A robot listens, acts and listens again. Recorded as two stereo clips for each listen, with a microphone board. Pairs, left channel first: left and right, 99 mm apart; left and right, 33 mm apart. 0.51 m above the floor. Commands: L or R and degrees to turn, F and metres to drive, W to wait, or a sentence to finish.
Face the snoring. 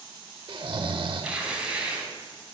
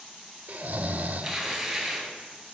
R50
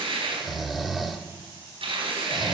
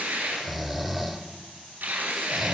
Found it: snoring, straight ahead, under 1 m away.